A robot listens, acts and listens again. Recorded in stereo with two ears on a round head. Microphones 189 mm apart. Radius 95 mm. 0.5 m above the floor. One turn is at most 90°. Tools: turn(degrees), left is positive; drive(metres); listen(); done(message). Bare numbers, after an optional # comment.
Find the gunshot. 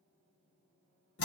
listen()
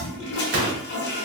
# The gunshot: about 40° right or 140° right.
turn(-40)
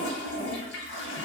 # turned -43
listen()
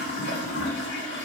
done("I heard a gunshot, but can't make it out now. It was about straight ahead or 95° right.")